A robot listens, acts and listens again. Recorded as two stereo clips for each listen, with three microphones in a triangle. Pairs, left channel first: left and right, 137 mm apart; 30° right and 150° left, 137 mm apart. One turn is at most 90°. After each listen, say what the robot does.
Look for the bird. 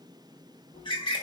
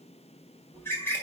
Turn 40° left.
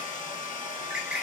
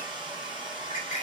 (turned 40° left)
Found it: a bird, straight ahead.